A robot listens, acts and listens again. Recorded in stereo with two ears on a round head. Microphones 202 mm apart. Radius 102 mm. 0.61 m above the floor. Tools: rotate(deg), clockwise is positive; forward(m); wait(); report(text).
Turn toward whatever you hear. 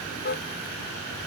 rotate(-40)
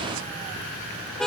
report("Facing the car horn.")